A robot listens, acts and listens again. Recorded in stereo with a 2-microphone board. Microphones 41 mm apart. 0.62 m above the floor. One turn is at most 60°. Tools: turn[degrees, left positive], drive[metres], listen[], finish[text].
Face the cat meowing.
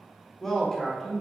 Action: listen[]
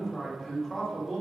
Action: listen[]
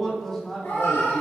Thought: The cat meowing: about 70° left or 110° left.
Action: turn[60]
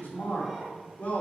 Action: listen[]
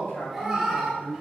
Thought: So it is at 10° right.
Action: turn[-10]
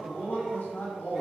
Action: listen[]
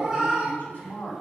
Thought: The cat meowing is now 15° right.
Action: turn[-15]
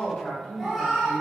Action: finish[Found it: a cat meowing, straight ahead, 2 to 4 m away.]